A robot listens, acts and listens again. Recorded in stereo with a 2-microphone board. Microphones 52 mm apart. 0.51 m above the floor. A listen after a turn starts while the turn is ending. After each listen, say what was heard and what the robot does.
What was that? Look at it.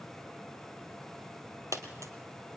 The dropped coin: about 70° right or 110° right. Turn 70° right.
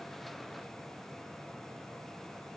Keep listening.
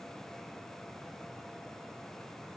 I heard a dropped coin, but can't make it out now. It was about straight ahead or 40° right.